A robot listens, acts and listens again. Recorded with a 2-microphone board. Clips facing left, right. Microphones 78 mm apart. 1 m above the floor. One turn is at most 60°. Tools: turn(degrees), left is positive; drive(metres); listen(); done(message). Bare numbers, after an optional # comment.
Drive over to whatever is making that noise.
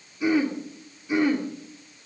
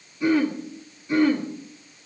turn(30)
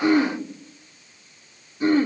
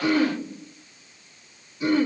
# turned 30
# So it is at 135° left.
turn(60)
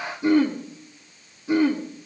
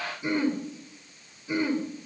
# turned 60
# The throat clearing is now 85° left.
turn(60)
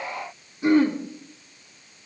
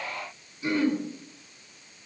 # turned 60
# The throat clearing is now 50° left.
turn(50)
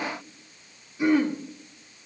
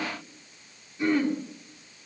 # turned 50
drive(1.0)
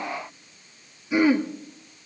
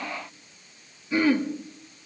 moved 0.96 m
# The throat clearing is now 10° left.
turn(10)
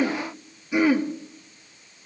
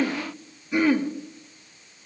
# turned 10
drive(1.0)
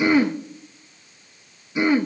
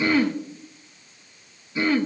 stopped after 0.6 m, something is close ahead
# The throat clearing is now 15° left.
turn(15)
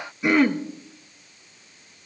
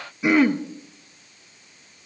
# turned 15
done("Arrived at the throat clearing, straight ahead.")